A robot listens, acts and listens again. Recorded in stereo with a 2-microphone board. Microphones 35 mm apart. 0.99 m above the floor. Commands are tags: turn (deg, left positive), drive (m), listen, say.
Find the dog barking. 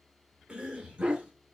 <turn deg="-40"/>
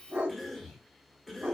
<turn deg="-95"/>
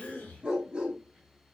<turn deg="-25"/>
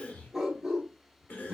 <turn deg="-10"/>
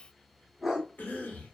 <say>Found it: a dog barking, straight ahead, 1 to 2 m away.</say>